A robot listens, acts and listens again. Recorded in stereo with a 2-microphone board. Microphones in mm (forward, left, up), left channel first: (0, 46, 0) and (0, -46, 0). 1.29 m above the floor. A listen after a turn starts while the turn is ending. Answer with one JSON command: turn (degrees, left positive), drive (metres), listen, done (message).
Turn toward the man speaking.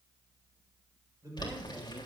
{"turn": -40}
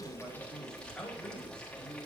{"turn": 10}
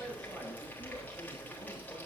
{"listen": true}
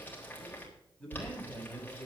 {"turn": 10}
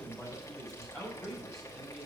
{"done": "Facing the man speaking, over 4 m away."}